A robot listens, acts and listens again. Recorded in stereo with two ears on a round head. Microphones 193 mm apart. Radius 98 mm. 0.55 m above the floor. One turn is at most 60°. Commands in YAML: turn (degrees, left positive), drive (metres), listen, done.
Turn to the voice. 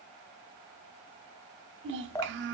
turn: -55
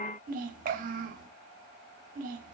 turn: -45
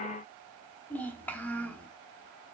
turn: 10
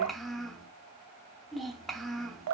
done: "Found it: a child speaking, straight ahead, 1 to 2 m away."